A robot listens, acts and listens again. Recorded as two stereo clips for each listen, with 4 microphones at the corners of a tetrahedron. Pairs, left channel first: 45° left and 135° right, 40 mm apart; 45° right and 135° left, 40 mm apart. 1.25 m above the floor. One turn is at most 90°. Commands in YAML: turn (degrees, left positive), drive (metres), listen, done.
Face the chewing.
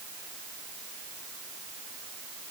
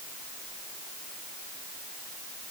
listen: true
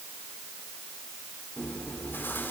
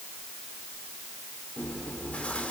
turn: 15
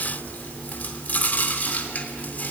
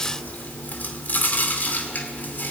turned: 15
done: "Facing the chewing, 2 to 4 m away."